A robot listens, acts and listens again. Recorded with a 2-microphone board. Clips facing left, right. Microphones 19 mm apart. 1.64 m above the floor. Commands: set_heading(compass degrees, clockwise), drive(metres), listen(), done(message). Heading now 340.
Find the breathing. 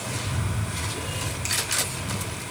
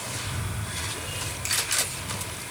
set_heading(40)
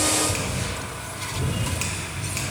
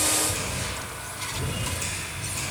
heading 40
done("Facing the breathing, over 4 m away.")